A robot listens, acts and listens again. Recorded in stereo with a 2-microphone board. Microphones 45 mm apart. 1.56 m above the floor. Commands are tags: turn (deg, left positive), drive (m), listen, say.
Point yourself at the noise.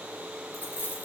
<turn deg="40"/>
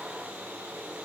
<listen/>
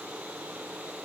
<say>I heard a dropped coin, but can't make it out now. It was about straight ahead or 100° left.</say>